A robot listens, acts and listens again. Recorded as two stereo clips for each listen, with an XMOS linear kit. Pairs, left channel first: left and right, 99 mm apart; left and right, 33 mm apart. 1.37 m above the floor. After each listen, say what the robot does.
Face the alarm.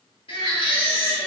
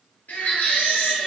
Keep listening.
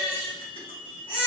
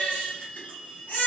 Turn 30° left.
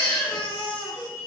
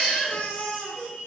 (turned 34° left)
Turn 30° right.
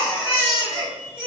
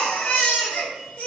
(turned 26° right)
Keep listening.
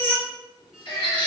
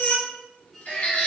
Facing the alarm.